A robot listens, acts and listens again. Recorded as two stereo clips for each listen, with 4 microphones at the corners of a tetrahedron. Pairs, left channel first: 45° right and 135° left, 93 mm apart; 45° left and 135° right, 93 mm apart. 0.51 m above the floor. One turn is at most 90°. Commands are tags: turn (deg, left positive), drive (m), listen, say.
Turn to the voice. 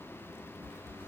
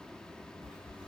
<listen/>
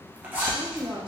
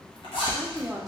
<turn deg="90"/>
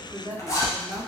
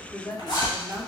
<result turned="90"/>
<turn deg="85"/>
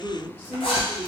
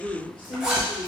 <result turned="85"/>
<turn deg="25"/>
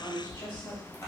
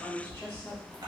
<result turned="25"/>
<turn deg="-20"/>
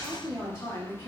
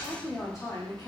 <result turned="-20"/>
<say>Found it: a woman speaking, straight ahead, 1 to 2 m away.</say>